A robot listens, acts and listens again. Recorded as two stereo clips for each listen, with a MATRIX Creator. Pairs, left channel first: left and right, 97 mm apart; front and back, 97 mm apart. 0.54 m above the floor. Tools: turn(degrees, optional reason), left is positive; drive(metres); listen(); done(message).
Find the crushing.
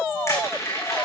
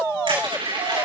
turn(degrees=150, reason="The crushing: 150° left.")
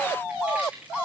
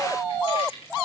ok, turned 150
turn(degrees=-15, reason="The crushing is now 15° right.")
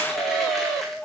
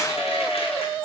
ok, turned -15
listen()
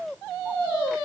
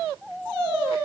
listen()
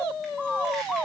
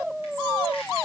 done("I heard crushing from this way, but can't make it out now.")